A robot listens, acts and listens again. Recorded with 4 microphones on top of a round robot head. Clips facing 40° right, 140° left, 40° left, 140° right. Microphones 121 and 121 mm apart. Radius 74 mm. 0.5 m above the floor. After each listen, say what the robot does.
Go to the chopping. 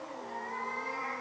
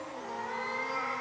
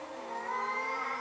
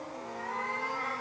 Keep listening.
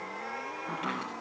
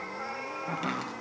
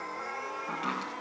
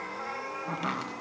Turn 170° right.
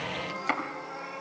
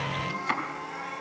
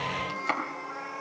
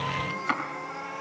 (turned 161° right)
Turn 10° right.
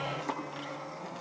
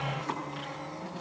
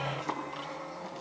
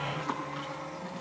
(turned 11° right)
Drive 1.0 m forward.
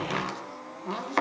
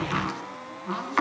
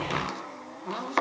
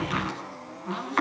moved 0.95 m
Drive 1.0 m forward.
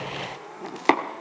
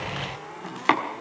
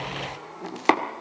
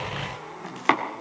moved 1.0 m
Drive 1.0 m forward.
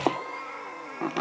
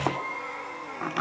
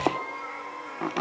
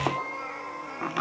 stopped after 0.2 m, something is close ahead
Arrived at the chopping, straight ahead.